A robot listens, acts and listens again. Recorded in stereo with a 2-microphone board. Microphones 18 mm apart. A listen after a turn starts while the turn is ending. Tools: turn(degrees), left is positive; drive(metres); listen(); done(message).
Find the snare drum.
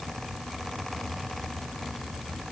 listen()
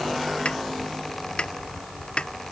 turn(degrees=65)
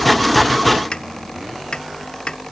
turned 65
turn(degrees=45)
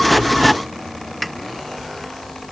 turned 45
done("Found it: a snare drum, straight ahead.")